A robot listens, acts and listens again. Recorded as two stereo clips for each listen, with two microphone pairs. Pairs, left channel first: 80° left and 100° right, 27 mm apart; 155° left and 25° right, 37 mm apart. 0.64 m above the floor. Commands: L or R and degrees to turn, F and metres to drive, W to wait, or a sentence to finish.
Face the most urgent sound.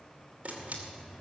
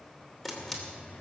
W
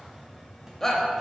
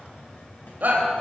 L10
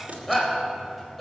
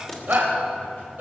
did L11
Facing the shout.